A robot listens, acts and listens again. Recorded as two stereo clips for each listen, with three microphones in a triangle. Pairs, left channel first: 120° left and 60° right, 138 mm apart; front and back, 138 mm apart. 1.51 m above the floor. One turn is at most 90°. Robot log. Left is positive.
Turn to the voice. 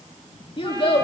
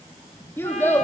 note: The child speaking: 75° left.
cmd yaw +75
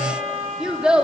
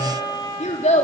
note: The child speaking is now 25° left.
cmd yaw +25
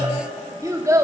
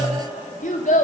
end: Facing the child speaking, 2 to 4 m away.